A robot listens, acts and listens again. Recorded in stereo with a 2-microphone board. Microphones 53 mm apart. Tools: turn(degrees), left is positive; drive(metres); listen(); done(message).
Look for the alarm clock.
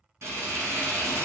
listen()
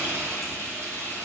listen()
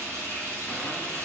done("I can't make out an alarm clock to turn to.")